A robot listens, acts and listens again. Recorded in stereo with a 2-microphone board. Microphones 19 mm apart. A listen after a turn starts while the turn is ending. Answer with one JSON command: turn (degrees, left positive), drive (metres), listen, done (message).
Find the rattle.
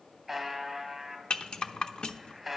{"turn": 55}
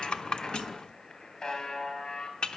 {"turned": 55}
{"turn": 60}
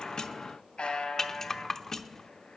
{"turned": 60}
{"turn": 25}
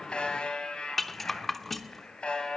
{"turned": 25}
{"turn": 10}
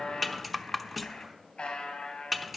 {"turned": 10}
{"done": "Found it: a rattle, straight ahead, under 1 m away."}